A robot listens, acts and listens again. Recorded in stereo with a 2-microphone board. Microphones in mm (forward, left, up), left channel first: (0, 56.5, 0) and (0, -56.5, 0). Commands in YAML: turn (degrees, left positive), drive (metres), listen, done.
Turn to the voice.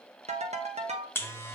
listen: true
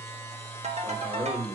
turn: -50
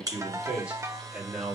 turn: -15
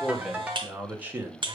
turn: -20
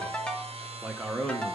done: "Found it: a man speaking, straight ahead, 1 to 2 m away."